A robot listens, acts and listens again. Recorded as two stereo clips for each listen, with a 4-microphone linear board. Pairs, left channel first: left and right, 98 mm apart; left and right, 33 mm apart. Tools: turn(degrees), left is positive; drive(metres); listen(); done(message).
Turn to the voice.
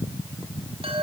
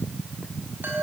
listen()
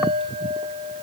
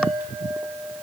listen()
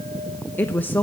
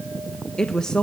turn(degrees=20)
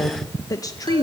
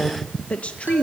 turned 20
turn(degrees=145)
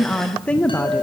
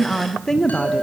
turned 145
turn(degrees=15)
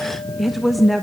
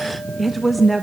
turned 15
done("Facing the woman speaking.")